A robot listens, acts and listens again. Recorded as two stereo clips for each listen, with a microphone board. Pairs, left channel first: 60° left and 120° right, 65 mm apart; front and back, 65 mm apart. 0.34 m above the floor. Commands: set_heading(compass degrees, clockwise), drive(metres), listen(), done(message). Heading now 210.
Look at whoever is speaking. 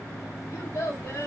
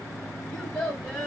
set_heading(130)
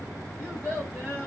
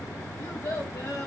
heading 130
done("Facing the child speaking.")